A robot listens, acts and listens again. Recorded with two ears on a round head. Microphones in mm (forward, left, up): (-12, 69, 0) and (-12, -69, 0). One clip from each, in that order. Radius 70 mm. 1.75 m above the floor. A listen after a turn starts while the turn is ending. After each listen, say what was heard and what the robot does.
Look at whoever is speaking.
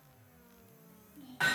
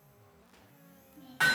The child speaking: about 20° left or 160° left. Turn 20° left.
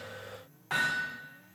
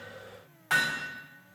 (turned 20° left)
Keep listening.
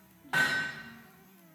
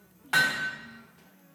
Found it: a child speaking, straight ahead.